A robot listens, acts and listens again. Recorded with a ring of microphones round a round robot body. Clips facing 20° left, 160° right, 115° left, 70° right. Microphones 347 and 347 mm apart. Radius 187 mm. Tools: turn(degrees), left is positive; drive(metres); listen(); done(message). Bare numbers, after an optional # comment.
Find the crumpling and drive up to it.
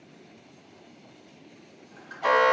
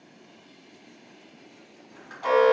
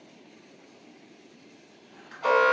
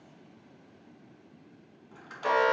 # The crumpling: 85° right.
turn(-85)
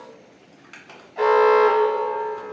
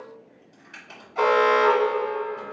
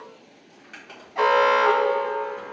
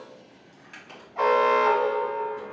# The crumpling is now 15° left.
turn(15)
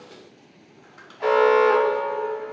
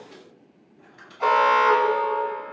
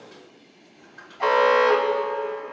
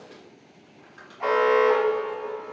drive(1.0)
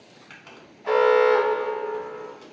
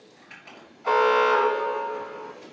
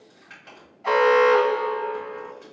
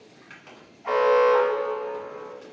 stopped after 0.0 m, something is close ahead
done("Something is in my way. I am facing the crumpling but have not reached it.")